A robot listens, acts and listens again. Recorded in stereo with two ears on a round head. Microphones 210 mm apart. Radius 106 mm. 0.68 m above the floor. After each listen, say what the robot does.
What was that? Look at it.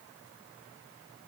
Keep listening.
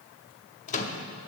Turn 30° left.
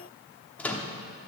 Found it: a microwave, straight ahead.